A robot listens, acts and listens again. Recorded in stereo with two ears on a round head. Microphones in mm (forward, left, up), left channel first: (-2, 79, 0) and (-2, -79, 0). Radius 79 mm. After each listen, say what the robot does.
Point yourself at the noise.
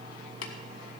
Turn 75° left.
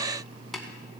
Found it: tapping, straight ahead, 1 to 2 m away.